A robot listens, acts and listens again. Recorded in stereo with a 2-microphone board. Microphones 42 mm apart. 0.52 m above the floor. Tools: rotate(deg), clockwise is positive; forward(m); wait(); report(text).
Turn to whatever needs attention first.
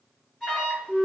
rotate(-20)
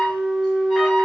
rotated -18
report("Found it: an alarm, straight ahead, 1 to 2 m away.")